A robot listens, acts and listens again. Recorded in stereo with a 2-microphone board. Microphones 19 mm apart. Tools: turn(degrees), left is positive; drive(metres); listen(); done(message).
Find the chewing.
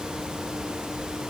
listen()
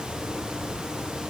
listen()
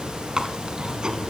turn(degrees=-45)
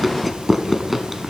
done("Facing the chewing, 1 to 2 m away.")